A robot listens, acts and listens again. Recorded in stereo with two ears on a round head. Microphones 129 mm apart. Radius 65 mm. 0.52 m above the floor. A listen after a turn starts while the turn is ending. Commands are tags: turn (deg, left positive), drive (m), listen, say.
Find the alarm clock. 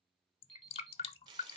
<turn deg="30"/>
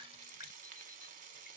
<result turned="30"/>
<listen/>
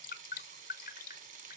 <listen/>
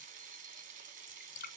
<say>I heard an alarm clock, but can't make it out now. It was about 25° right or 145° left.</say>